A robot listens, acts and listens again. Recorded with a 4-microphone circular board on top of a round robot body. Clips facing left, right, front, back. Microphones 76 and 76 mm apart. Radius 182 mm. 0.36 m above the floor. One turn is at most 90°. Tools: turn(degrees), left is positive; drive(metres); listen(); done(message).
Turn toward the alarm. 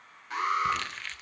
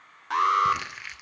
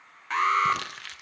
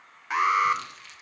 turn(degrees=-90)
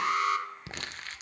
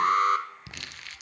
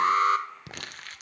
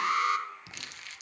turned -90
turn(degrees=-50)
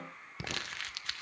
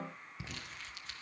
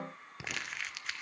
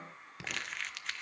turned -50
listen()
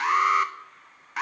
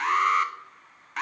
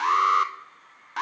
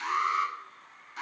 done("Found it: an alarm, straight ahead.")